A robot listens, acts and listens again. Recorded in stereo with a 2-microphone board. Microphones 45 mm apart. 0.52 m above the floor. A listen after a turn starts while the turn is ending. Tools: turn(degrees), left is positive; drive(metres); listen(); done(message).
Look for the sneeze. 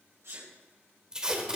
turn(degrees=-70)
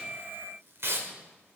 listen()
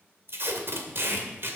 done("I heard a sneeze, but can't make it out now. It was about straight ahead or 40° right.")